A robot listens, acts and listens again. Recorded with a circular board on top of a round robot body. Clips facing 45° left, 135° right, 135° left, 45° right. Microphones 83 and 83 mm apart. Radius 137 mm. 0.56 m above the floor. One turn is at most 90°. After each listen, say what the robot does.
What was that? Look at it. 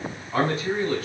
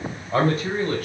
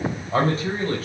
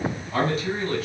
Turn 90° right.
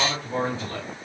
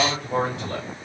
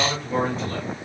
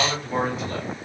Turn 90° right.
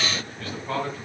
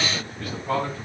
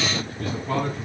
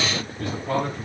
Turn 60° right.
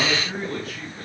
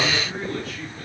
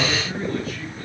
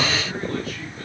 Found it: a man speaking, straight ahead.